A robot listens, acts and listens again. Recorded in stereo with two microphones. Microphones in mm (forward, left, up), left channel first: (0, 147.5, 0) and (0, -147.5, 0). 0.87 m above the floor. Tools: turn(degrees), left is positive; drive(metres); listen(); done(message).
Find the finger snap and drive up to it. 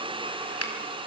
turn(degrees=50)
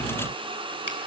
listen()
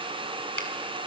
listen()
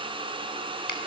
done("I heard a finger snap, but can't make it out now. It was about straight ahead or 80° left. I did not reach it.")